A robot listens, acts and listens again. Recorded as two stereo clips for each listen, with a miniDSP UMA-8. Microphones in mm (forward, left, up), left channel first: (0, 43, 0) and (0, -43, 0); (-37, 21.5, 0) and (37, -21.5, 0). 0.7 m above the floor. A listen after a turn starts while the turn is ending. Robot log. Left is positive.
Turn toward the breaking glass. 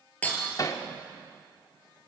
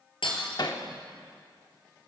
note: The breaking glass: 165° left.
cmd yaw +165
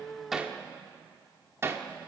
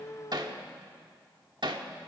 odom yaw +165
end: Facing where the breaking glass came from. I can't hear it now.